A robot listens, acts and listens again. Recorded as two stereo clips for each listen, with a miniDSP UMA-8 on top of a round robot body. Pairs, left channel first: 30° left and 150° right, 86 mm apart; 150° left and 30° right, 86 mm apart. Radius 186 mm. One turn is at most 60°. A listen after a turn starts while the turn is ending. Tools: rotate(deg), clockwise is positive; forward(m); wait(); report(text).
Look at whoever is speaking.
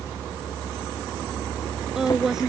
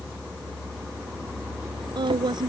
rotate(60)
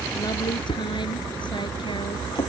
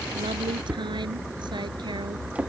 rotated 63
wait()
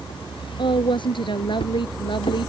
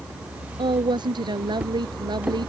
report("Facing the woman speaking.")